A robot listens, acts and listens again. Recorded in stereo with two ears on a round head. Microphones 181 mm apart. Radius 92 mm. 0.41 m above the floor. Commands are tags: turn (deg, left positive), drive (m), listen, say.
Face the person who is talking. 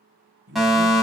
<turn deg="-65"/>
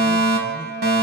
<listen/>
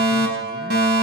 <listen/>
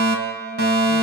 <say>I heard a man speaking, but can't make it out now. It was about straight ahead or 50° right.</say>